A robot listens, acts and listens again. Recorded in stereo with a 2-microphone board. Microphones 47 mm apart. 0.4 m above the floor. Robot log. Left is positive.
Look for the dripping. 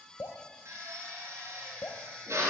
note: The dripping: about 70° left or 110° left.
cmd yaw +70
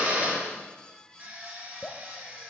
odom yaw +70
note: So it is at 25° left.
cmd yaw +25
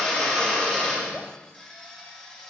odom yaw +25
cmd idle
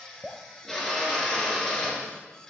note: The dripping is now 10° right.
cmd yaw -10
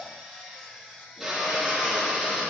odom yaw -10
cmd idle
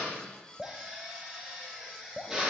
end: Facing the dripping, under 1 m away.